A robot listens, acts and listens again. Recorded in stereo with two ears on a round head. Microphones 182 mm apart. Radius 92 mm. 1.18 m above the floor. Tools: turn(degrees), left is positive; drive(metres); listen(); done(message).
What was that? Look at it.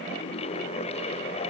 listen()
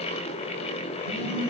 turn(degrees=-45)
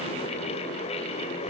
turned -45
listen()
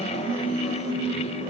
done("Facing the phone buzzing.")